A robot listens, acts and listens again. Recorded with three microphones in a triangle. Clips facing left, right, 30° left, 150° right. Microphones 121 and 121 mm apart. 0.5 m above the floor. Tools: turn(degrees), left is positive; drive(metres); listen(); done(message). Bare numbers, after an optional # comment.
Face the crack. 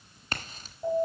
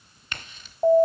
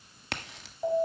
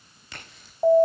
# The crack: 35° left.
turn(35)
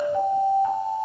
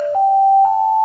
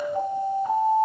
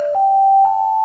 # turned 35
done("Facing where the crack came from. I can't hear it now.")